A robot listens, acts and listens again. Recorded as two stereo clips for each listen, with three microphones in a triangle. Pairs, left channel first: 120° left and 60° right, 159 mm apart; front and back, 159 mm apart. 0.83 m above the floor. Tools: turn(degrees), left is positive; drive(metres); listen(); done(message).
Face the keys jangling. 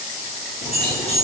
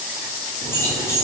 turn(degrees=75)
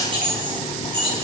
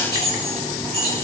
done("Facing the keys jangling.")